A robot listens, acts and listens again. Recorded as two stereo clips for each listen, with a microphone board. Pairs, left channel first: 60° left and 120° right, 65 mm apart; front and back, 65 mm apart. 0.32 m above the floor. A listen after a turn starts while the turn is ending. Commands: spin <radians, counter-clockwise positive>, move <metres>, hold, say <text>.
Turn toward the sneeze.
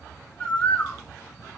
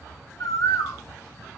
hold
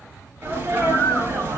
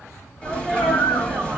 spin -1.22
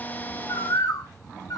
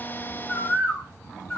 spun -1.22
say I heard a sneeze from this way, but can't make it out now.